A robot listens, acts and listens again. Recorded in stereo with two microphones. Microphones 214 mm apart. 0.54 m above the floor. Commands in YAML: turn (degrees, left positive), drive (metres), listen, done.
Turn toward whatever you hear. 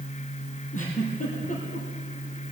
turn: 35
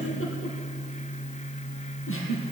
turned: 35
turn: 105
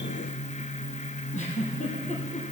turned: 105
turn: 35
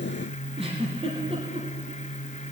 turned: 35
turn: -25
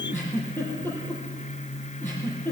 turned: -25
turn: 10
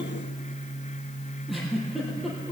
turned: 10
done: "Facing the giggle."